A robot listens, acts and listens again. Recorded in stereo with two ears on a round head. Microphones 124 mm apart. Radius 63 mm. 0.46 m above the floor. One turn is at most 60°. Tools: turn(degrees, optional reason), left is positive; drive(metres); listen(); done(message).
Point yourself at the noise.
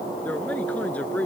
turn(degrees=30)
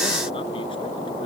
listen()
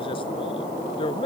turn(degrees=60, reason="So it is at 140° left.")
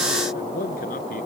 turn(degrees=60, reason="The man speaking is now 60° left.")
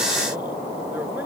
listen()
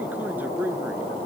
turn(degrees=-10, reason="The man speaking is now 10° right.")
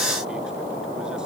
listen()
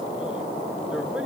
listen()
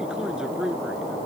done("Facing the man speaking.")